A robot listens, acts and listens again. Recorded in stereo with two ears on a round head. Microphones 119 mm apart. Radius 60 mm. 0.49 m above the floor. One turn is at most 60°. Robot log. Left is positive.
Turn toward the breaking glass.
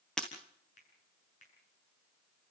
cmd yaw +30
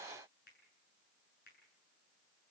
cmd idle
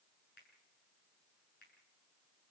end: I heard breaking glass, but can't make it out now. It was about 25° right or 145° left.